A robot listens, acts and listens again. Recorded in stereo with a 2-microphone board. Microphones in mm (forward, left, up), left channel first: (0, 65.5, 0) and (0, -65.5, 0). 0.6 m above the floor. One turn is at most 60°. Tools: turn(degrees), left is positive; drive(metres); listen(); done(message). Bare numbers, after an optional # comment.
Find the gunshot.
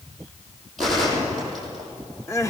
turn(30)
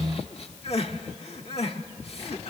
listen()
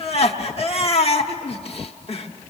done("I heard a gunshot, but can't make it out now. It was about 30° right or 150° left.")